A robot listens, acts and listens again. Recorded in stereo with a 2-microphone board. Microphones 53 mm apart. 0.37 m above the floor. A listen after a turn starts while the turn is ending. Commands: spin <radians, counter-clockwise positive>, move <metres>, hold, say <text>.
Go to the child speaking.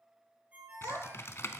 spin -1.57
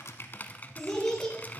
move 1.0
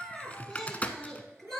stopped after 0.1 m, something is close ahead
say Something is in my way. I am facing the child speaking but have not reached it.